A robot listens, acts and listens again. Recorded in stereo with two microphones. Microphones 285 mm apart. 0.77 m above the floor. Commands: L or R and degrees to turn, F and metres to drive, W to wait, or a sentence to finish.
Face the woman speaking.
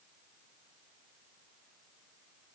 W
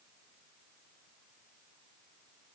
W
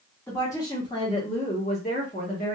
L30
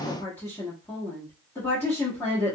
L10
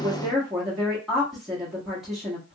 Facing the woman speaking.